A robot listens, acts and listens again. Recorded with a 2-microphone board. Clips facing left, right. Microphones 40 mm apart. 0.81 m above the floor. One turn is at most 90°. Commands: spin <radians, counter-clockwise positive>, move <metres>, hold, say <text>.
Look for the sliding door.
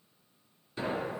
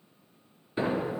spin -0.44
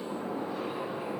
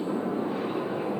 spin -1.57
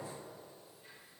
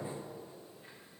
spin -0.70
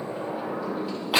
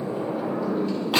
say Facing the sliding door, 1 to 2 m away.